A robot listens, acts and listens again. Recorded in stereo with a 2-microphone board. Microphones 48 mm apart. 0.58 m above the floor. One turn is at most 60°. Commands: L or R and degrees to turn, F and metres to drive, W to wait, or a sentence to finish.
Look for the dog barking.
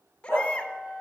R60
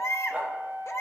R25
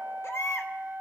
W
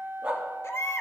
R20
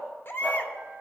W
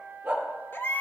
R15
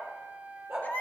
R10
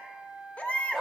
Found it: a dog barking, straight ahead, 2 to 4 m away.